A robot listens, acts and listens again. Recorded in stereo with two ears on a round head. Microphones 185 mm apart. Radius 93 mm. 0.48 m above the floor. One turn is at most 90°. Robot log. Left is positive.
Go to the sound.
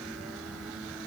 cmd idle
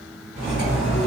note: The cutlery clinking: about 20° right or 160° right.
cmd yaw -20
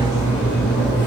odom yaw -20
cmd fwd 1.0
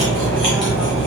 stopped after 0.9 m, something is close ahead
end: I am next to the cutlery clinking.